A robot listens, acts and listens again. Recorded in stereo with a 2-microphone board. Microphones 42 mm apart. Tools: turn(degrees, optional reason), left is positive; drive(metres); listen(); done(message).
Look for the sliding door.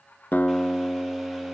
listen()
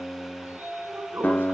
turn(degrees=-55, reason="The sliding door: about 55° right or 125° right.")
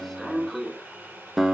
done("Facing the sliding door, over 4 m away.")